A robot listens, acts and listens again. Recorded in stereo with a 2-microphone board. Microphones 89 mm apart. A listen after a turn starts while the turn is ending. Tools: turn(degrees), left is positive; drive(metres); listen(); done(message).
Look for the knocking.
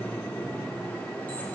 listen()
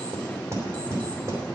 turn(degrees=-35)
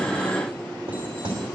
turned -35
turn(degrees=-110)
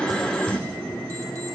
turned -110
turn(degrees=15)
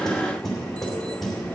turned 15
done("Facing the knocking, 2 to 4 m away.")